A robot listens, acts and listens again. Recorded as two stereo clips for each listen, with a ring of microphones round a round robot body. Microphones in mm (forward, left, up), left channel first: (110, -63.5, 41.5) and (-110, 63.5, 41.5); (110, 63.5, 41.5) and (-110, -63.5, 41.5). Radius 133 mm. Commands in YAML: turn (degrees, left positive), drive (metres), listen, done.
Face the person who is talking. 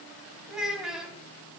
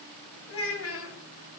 turn: 65
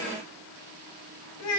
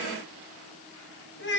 turn: -15
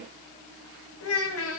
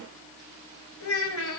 done: "Facing the child speaking."